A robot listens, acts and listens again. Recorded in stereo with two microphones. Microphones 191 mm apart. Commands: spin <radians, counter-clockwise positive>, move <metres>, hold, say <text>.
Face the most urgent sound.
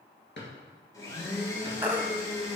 spin -0.52
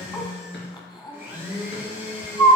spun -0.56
spin 0.35
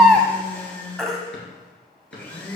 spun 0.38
say Found it: a baby crying, straight ahead.